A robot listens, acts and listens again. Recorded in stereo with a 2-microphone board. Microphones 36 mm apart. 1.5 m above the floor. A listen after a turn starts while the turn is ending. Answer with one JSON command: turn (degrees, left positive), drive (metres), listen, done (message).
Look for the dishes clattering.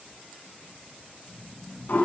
{"listen": true}
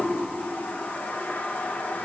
{"listen": true}
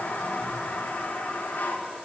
{"done": "I can't make out dishes clattering, only snoring and a toilet flushing."}